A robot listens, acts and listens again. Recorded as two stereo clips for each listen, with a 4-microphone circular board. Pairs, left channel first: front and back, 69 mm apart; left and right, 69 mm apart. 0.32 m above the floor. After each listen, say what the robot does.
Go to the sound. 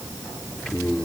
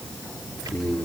Turn 75° right.
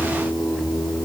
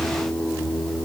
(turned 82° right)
Turn 10° left.
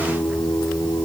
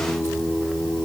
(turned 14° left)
Drive 1.0 m forward.
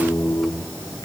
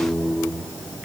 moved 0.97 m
Turn 10° right.
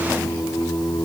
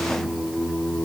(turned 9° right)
Drive 1.0 m forward.
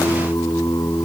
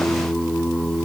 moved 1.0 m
Drive 1.0 m forward.
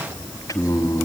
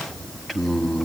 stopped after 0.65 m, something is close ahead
I am next to the singing.